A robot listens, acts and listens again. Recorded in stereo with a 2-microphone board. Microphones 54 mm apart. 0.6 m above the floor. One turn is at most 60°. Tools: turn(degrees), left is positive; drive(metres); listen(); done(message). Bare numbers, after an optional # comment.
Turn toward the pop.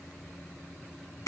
listen()
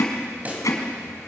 # The pop: about 25° right or 155° right.
turn(-25)
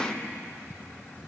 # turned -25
listen()
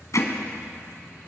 done("I heard a pop, but can't make it out now. It was about straight ahead or 130° right.")